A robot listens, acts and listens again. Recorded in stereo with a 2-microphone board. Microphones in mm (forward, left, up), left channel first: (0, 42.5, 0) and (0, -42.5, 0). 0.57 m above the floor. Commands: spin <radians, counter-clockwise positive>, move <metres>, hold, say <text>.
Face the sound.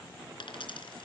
spin 1.31
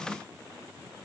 hold
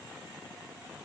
say I heard a dropped coin, but can't make it out now. It was about straight ahead or 30° left.